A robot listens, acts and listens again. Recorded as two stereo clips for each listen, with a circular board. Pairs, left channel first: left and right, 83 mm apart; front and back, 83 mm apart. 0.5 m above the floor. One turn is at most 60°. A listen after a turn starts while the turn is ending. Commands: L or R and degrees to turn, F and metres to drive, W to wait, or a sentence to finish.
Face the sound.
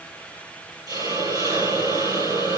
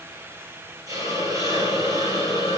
R60
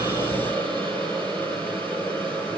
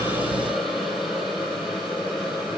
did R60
R60
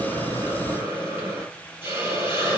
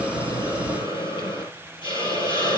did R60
R25
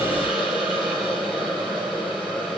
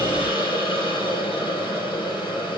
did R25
R10
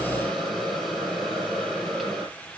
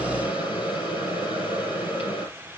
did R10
Found it: a hiss, straight ahead.